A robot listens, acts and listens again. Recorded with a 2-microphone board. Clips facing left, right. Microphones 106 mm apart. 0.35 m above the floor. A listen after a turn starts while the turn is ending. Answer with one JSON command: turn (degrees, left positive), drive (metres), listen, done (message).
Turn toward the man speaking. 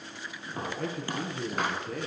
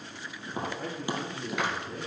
{"turn": 90}
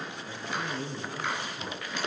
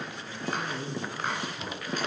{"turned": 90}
{"turn": -10}
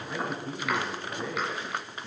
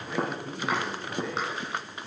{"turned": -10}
{"done": "Facing the man speaking, 2 to 4 m away."}